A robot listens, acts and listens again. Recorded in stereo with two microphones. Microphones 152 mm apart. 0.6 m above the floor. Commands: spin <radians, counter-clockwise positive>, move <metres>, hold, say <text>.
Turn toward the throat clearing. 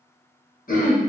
spin 1.05
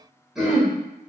say Facing the throat clearing.